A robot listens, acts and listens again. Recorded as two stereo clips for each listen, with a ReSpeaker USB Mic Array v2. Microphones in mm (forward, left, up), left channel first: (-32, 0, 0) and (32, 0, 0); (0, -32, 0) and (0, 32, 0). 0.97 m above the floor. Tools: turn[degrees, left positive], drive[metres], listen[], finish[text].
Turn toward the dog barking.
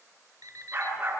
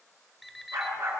Thought: The dog barking: 55° left.
Action: turn[55]
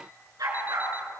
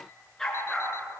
Thought: The dog barking is now 10° right.
Action: turn[-10]
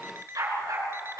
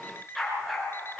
Action: finish[Found it: a dog barking, straight ahead, over 4 m away.]